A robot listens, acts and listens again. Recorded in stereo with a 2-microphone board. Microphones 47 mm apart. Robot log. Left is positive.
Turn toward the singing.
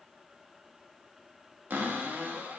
cmd idle
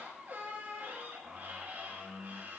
cmd idle
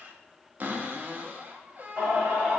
note: The singing: about 35° right or 145° right.
cmd yaw -35
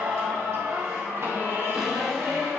note: So it is at 110° right.
cmd yaw -110
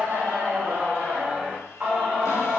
note: The singing is now 30° right.
cmd yaw -30
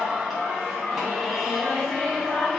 end: Facing the singing, over 4 m away.